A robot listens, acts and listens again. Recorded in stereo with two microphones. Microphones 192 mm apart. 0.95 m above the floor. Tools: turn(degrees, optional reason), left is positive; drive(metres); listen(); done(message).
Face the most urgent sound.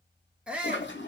turn(degrees=-30)
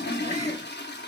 listen()
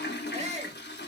turn(degrees=-145, reason="So it is at 145° right.")
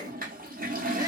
turn(degrees=-20, reason="The shout is now 20° right.")
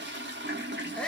done("Facing the shout.")